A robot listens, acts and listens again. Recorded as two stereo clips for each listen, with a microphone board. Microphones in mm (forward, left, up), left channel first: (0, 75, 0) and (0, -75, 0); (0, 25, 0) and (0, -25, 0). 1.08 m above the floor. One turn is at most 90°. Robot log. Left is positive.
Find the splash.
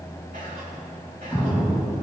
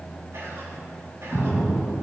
cmd yaw +30
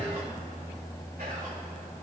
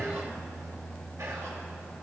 cmd idle
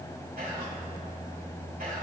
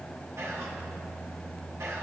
end: I heard a splash, but can't make it out now. It was about 25° right or 145° left.